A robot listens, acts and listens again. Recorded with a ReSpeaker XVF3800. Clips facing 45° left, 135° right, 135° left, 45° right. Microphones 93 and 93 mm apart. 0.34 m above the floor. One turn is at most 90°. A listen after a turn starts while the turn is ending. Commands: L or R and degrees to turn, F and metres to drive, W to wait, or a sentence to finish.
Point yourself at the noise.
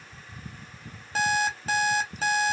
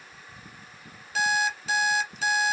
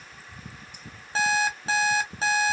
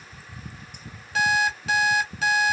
L85
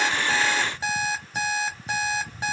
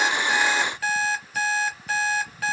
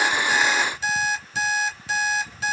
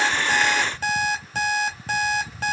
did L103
R20
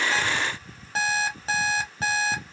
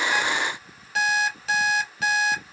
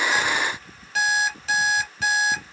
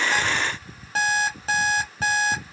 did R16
Found it: an alarm clock, straight ahead, under 1 m away.